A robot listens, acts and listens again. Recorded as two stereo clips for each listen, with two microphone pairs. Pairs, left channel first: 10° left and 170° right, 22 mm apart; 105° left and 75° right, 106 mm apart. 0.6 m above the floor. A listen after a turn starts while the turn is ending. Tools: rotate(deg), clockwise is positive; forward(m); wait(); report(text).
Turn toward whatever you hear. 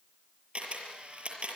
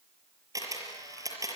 rotate(135)
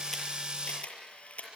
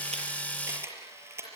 rotate(10)
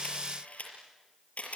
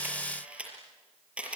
report("Found it: a camera shutter, straight ahead, over 4 m away.")